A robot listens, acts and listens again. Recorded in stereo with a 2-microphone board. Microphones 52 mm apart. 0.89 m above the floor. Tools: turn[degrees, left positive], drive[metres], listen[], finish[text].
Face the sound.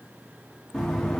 Action: turn[30]
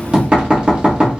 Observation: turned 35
Thought: So it is at 20° right.
Action: turn[-20]
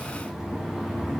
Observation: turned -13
Thought: The knocking is now 10° right.
Action: turn[-10]
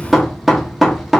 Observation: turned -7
Action: finish[Facing the knocking.]